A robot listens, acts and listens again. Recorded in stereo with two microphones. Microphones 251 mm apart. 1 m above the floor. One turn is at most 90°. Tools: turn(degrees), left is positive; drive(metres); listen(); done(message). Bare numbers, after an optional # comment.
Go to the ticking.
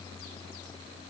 listen()
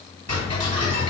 # The ticking: about 75° right or 105° right.
turn(-75)
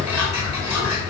# So it is at 10° right.
turn(-10)
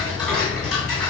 drive(1.0)
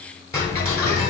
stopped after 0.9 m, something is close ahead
# The ticking is now 10° left.
turn(10)
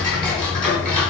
done("I am next to the ticking.")